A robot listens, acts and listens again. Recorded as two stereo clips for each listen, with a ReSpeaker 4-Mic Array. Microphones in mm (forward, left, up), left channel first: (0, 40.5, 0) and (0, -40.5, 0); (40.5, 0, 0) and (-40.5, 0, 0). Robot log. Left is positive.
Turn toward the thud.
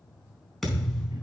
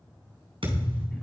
note: The thud: straight behind.
cmd yaw +180
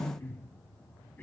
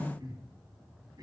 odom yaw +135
note: Nothing new. It was at 45° left.
cmd yaw +45
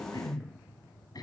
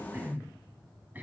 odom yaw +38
note: Nothing new. It was at 10° left.
cmd yaw +10
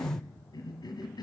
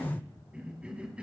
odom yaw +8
end: I heard a thud from this way, but can't make it out now.